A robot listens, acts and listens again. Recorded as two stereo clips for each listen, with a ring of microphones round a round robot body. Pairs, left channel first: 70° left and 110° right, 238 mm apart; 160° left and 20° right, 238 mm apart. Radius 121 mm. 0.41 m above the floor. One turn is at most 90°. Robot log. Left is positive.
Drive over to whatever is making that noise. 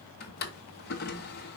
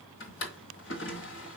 note: The drawer: 120° left.
cmd yaw +90
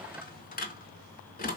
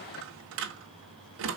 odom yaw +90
note: The drawer is now 15° left.
cmd yaw +15
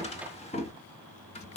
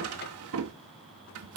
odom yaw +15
cmd fwd 1.0
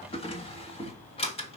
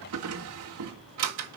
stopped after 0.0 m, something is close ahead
end: Blocked. The drawer is further on, straight ahead.